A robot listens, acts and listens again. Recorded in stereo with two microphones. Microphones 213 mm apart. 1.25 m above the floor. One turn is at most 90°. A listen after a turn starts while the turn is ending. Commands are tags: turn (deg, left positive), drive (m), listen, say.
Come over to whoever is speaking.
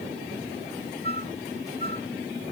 <listen/>
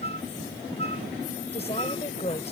<turn deg="30"/>
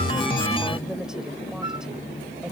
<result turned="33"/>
<listen/>
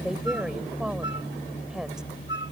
<drive m="1.0"/>
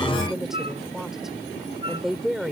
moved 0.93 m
<drive m="1.0"/>
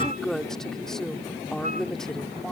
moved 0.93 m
<drive m="1.0"/>
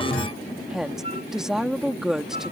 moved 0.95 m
<drive m="1.0"/>
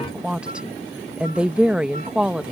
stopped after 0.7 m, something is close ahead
<say>I am next to the woman speaking.</say>